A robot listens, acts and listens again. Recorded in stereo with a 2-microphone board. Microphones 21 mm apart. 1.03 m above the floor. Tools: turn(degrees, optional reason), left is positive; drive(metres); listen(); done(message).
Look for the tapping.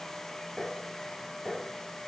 turn(degrees=-30)
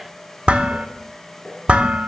listen()
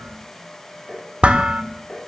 turn(degrees=25, reason="So it is at 25° left.")
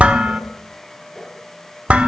done("Facing the tapping, over 4 m away.")